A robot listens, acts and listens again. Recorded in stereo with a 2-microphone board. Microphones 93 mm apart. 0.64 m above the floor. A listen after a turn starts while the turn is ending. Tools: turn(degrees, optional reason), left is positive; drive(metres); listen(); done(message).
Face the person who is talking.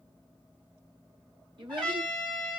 turn(degrees=-60, reason="The child speaking: about 60° right or 120° right.")
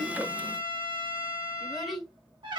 done("Found it: a child speaking, straight ahead.")